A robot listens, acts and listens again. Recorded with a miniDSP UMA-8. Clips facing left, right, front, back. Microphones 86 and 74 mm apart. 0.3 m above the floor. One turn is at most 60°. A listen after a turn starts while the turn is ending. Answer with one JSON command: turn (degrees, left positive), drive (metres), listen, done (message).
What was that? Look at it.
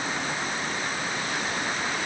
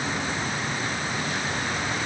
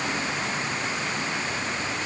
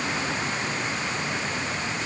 {"listen": true}
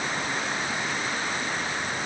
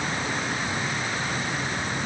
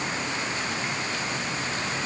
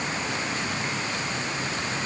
{"listen": true}
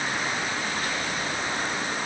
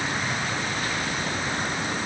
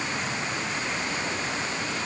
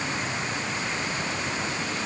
{"done": "I can't make out anything."}